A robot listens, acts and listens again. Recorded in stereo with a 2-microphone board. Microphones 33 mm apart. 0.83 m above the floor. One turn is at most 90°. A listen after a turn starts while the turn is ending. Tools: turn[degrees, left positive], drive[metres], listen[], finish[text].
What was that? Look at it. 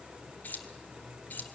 Action: turn[90]
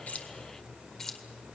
Thought: So it is at 15° left.
Action: turn[15]
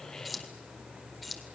Action: finish[Found it: keys jangling, straight ahead.]